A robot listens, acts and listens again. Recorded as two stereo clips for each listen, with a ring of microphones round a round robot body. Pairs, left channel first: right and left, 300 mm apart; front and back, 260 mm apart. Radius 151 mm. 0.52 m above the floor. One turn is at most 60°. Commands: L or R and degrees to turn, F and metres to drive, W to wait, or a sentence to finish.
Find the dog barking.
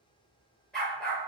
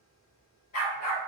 Facing the dog barking.